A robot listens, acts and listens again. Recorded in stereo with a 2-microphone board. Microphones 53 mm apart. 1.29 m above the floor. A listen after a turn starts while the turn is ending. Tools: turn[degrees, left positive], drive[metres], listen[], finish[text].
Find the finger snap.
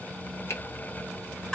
Thought: The finger snap: about 50° left or 130° left.
Action: turn[50]
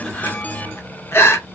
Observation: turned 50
Action: listen[]
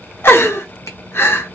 Action: listen[]
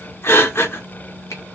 Action: finish[I heard a finger snap, but can't make it out now. It was about straight ahead or 80° left.]